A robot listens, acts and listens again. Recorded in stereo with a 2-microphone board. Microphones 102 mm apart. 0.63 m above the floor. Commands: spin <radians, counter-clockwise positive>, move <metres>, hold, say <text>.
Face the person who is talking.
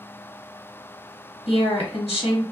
spin 1.22
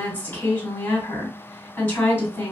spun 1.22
spin 0.44
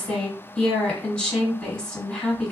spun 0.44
spin 0.26
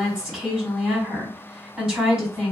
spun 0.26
say Facing the woman speaking, 1 to 2 m away.